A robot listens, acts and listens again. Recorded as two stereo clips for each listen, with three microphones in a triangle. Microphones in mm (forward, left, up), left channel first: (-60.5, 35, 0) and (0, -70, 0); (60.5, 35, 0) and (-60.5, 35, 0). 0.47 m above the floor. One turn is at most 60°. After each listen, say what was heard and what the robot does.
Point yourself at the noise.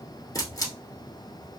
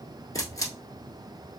The camera shutter: 65° left. Turn 60° left.
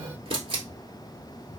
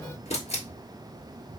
The camera shutter is now 20° right. Turn 20° right.
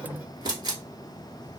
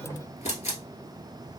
Facing the camera shutter, 1 to 2 m away.